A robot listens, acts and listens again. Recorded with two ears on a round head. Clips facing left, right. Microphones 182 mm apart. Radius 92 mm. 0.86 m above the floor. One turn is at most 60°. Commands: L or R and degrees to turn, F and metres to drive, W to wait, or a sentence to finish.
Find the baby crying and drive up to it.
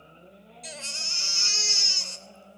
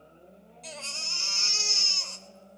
L20
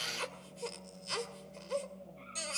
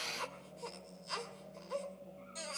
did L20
L60
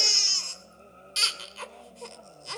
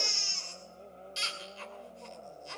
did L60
L60
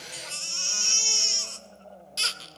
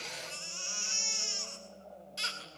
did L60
L50
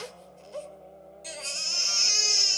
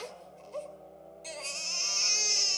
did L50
L10
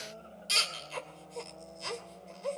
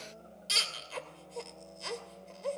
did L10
F1.0
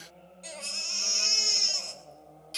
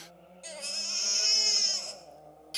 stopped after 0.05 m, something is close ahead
Something is in my way. I am facing the baby crying but have not reached it.